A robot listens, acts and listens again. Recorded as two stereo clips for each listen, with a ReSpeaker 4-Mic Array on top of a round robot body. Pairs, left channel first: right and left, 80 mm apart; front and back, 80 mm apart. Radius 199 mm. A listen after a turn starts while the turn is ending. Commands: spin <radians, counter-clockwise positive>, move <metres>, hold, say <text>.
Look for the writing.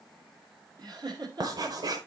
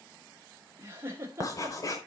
spin 0.87
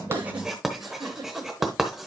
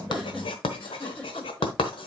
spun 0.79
say Facing the writing.